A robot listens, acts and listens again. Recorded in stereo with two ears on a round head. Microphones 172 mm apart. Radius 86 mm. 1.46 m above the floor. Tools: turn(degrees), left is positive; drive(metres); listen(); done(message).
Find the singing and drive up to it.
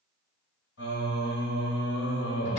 turn(degrees=65)
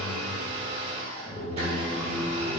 turn(degrees=45)
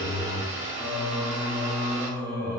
turn(degrees=15)
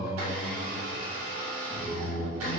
drive(metres=1.0)
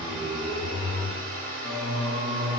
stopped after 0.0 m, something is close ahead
done("Blocked. The singing is further on, straight ahead.")